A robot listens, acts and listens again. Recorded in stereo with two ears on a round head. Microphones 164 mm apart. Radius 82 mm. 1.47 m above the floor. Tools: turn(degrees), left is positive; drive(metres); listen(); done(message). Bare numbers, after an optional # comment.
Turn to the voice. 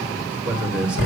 turn(-30)
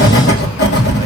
listen()
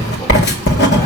listen()
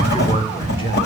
# So it is at 25° left.
turn(25)
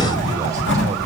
listen()
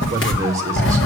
# The man speaking is now 15° right.
turn(-15)
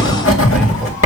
listen()
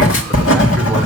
listen()
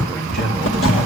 done("Found it: a man speaking, straight ahead, 2 to 4 m away.")